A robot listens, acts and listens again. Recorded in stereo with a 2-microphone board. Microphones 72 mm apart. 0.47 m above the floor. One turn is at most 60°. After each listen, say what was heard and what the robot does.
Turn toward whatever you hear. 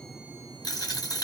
The dropped coin: about 75° left or 105° left. Turn 60° left.
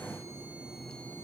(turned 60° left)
Keep listening.
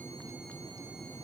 I heard a dropped coin, but can't make it out now. It was about 15° left or 45° left.